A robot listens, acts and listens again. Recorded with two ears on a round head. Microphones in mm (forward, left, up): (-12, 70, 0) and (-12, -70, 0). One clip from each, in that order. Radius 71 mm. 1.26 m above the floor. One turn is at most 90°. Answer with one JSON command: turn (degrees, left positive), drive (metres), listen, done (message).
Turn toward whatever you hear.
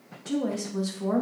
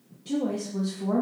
{"turn": 40}
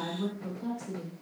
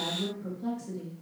{"turn": 15}
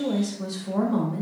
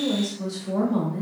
{"turn": 10}
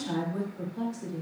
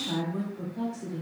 {"turn": 10}
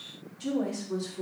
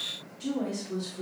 {"done": "Facing the woman speaking, 2 to 4 m away."}